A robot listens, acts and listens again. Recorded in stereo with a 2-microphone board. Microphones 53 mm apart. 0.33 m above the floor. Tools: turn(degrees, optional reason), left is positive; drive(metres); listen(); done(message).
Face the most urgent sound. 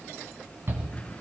turn(degrees=-45, reason="The shout: about 45° right or 135° right.")
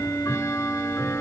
listen()
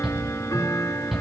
done("Facing the shout, 2 to 4 m away.")